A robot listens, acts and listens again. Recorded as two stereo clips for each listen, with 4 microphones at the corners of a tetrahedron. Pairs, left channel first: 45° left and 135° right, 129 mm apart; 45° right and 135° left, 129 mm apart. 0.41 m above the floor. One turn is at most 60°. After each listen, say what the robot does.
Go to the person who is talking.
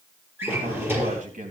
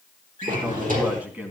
Turn 60° right.
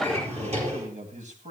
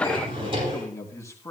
Turn 60° right.
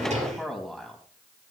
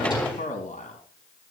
Turn 40° right.
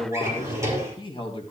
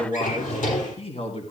Drive 1.0 m forward.
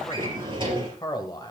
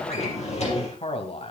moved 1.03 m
Turn 10° right.
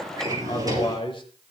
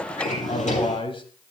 Drive 1.0 m forward.
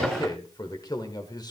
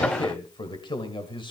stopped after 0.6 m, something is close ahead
I am next to the man speaking.